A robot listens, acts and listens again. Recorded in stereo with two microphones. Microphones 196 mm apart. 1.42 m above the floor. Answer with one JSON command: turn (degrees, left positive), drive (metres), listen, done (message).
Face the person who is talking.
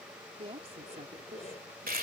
{"turn": -30}
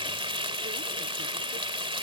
{"listen": true}
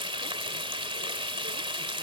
{"listen": true}
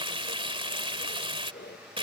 {"done": "I heard a woman speaking, but can't make it out now. It was about straight ahead or 120° right."}